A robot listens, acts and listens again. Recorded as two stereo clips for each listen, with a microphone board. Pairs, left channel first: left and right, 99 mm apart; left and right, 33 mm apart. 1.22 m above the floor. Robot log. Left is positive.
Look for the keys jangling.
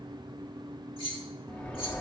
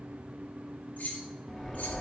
note: The keys jangling: about 70° left or 110° left.
cmd yaw +70
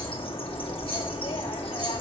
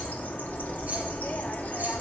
cmd idle
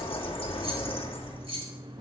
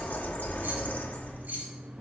note: So it is at 75° right.
cmd yaw -75
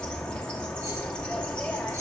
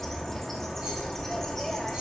cmd idle
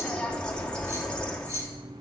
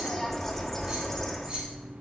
cmd idle
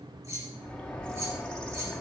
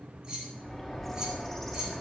note: The keys jangling is now 30° right.
cmd yaw -30
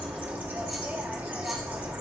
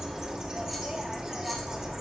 cmd idle
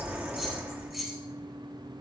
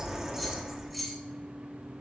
end: Found it: keys jangling, straight ahead, 1 to 2 m away.